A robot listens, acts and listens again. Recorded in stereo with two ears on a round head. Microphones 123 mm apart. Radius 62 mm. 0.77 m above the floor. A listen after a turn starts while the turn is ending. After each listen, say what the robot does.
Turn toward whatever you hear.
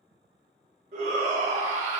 Turn 60° right.
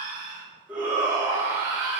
Turn 15° right.
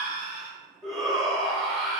Facing the shout, 1 to 2 m away.